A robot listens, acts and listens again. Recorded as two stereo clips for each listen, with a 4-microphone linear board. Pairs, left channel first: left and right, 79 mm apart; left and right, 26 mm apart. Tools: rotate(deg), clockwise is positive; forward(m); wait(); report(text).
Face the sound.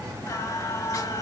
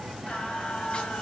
rotate(-45)
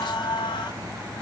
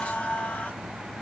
rotate(-75)
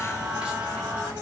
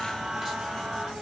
rotate(15)
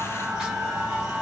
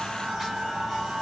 rotate(10)
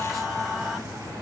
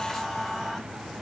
report("Found it: singing, straight ahead.")